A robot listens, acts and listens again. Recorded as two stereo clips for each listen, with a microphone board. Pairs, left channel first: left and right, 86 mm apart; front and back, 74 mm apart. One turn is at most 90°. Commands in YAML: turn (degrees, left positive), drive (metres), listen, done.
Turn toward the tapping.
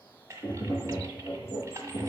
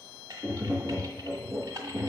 turn: 90
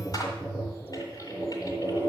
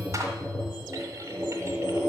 turn: 25
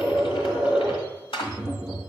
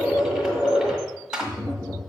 turn: -10
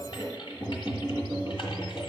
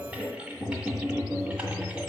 done: "Facing the tapping, over 4 m away."